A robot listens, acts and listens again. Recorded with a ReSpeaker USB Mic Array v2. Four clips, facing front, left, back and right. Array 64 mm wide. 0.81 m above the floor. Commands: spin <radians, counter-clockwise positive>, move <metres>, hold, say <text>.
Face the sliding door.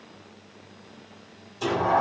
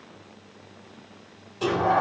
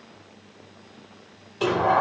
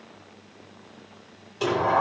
spin -2.79
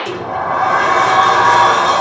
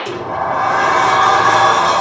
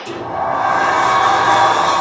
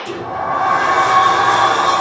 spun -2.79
spin 0.61
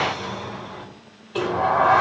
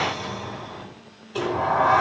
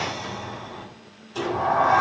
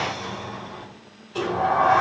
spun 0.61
spin 0.17
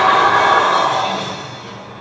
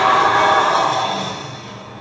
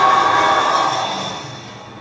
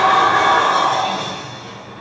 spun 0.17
say Facing the sliding door.